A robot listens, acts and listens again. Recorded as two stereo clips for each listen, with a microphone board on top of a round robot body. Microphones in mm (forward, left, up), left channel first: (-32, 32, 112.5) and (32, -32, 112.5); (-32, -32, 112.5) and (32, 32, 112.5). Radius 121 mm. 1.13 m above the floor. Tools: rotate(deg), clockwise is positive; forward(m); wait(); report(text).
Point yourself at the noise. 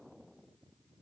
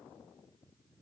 wait()
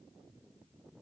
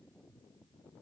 wait()
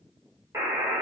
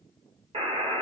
rotate(-15)
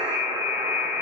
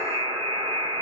report("Facing the buzzer.")